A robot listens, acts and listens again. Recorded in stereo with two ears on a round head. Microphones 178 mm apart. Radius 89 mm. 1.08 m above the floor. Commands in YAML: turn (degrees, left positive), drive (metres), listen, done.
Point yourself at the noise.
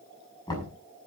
turn: 20
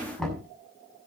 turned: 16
done: "Found it: knocking, straight ahead, over 4 m away."